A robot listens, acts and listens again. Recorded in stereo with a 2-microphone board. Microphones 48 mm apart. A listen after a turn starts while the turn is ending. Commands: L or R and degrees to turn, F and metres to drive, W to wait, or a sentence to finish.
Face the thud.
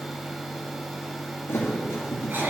L65
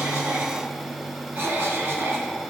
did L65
W
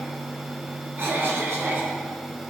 I heard a thud, but can't make it out now. It was about straight ahead or 50° left.